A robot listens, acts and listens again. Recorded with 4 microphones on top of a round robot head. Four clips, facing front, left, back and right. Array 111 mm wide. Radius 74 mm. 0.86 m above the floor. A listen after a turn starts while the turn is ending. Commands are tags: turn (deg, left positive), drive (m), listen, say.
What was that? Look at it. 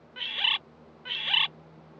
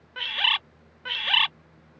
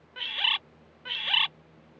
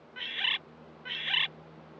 <turn deg="90"/>
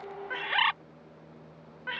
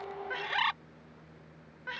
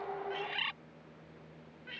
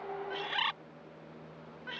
<turn deg="15"/>
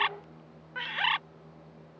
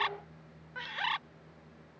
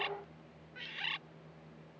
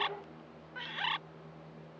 <turn deg="10"/>
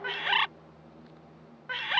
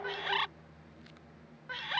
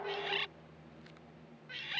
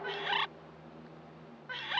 <say>Facing the bird.</say>